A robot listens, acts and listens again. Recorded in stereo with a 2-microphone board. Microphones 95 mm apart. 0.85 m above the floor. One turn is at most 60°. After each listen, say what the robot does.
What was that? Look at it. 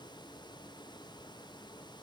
Keep listening.
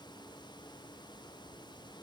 Keep listening.
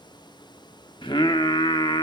Turn 60° left.
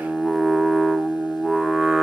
Facing the singing.